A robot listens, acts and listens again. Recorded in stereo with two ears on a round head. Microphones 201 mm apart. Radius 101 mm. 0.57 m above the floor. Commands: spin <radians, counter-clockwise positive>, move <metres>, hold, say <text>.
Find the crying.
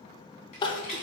spin 0.35
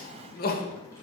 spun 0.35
spin 2.36
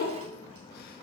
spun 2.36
spin 0.79
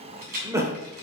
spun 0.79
spin -0.26
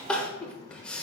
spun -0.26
say Found it: crying, straight ahead, under 1 m away.